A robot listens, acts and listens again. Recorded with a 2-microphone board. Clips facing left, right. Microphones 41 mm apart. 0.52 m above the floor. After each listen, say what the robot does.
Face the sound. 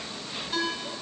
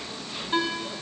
Turn 30° right.
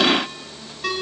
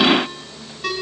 Facing the ringtone, 2 to 4 m away.